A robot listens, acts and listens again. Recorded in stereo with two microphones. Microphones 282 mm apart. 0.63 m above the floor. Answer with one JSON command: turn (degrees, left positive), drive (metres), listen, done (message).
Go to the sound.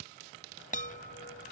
{"turn": 30}
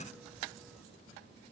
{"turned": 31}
{"listen": true}
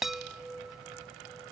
{"drive": 1.0}
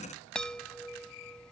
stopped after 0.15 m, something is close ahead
{"done": "Something is in my way. I am facing the chime but have not reached it."}